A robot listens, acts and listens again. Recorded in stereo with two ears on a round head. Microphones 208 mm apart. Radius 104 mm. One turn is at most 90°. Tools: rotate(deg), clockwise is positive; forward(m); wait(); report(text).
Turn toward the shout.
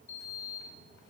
wait()
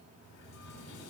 wait()
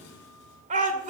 rotate(35)
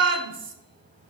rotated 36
rotate(90)
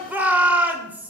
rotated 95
rotate(10)
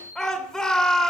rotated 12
report("Facing the shout.")